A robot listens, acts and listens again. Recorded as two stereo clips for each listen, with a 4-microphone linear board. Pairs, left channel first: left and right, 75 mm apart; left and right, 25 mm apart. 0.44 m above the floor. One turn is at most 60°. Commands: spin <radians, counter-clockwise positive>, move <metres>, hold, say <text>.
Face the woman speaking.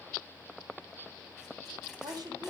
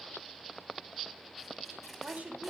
spin -1.05
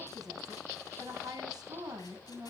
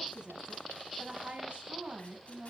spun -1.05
spin -1.05
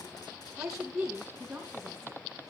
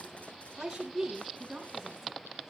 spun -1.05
spin -0.17
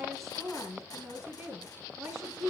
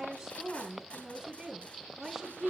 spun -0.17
say Facing the woman speaking.